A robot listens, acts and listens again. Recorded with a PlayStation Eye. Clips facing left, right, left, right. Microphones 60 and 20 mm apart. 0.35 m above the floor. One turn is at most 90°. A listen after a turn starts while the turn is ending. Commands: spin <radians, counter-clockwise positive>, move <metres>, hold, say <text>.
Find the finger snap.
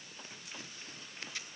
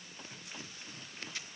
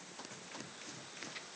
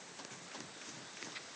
hold
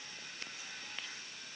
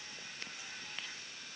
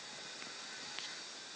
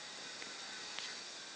hold
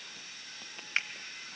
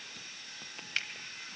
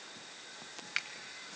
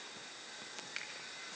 spin 0.52
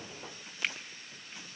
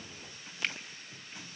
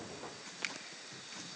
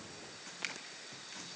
say Facing the finger snap, 1 to 2 m away.